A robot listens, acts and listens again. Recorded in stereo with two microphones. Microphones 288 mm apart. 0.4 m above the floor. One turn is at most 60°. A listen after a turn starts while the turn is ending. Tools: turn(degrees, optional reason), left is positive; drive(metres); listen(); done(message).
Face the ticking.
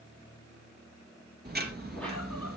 turn(degrees=-35, reason="The ticking: about 35° right or 145° right.")
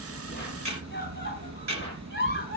turn(degrees=-60, reason="So it is at 110° right.")
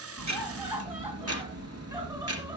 turn(degrees=-60, reason="The ticking is now 60° right.")
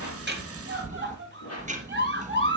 turn(degrees=-25, reason="The ticking is now 25° right.")
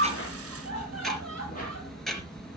done("Found it: ticking, straight ahead, 2 to 4 m away.")